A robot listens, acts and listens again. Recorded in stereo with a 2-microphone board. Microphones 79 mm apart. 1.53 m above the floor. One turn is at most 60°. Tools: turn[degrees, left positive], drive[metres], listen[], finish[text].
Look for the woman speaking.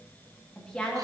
Action: turn[30]
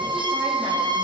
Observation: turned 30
Action: listen[]
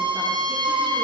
Action: listen[]
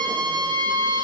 Action: finish[I heard a woman speaking, but can't make it out now. It was about 15° right or 135° left.]